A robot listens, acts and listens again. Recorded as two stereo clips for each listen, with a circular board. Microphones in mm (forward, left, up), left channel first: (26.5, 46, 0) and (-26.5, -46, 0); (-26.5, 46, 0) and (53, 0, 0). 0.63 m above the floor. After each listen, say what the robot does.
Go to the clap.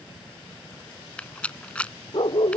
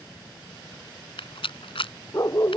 Keep listening.
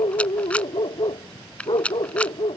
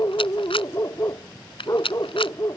Keep listening.
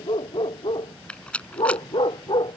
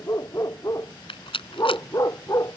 I can't make out a clap, only a rattle and a dog barking.